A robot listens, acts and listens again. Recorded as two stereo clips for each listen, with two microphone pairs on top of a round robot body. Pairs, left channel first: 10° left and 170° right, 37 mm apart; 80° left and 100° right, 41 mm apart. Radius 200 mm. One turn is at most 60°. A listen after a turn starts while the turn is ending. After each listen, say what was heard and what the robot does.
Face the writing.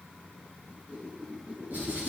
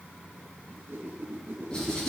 The writing: 155° left. Turn 60° left.
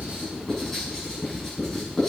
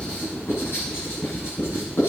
The writing is now 100° left. Turn 60° left.
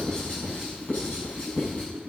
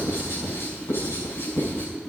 The writing is now 60° left. Turn 60° left.
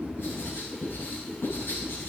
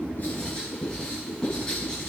Found it: writing, straight ahead.